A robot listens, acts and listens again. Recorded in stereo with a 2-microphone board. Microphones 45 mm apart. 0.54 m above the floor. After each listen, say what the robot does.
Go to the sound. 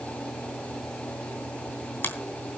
Turn 50° left.
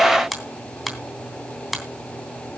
Drive 1.0 m forward.
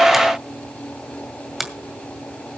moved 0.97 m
Drive 1.0 m forward.
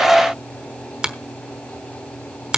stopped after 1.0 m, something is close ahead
Turn 20° right.
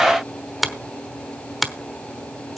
Arrived at the finger snap, straight ahead.